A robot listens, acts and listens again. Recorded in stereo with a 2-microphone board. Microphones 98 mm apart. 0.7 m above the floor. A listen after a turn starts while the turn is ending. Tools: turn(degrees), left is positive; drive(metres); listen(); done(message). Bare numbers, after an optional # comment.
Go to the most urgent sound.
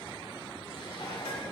listen()
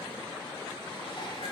listen()
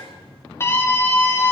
# The scream: about 30° left or 150° left.
turn(30)
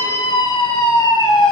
# So it is at 120° left.
turn(120)
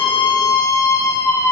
# The scream is now 35° left.
turn(35)
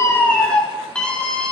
# The scream is now 10° left.
turn(10)
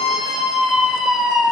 drive(1.0)
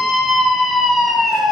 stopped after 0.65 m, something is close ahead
done("Blocked. The scream is further on, straight ahead.")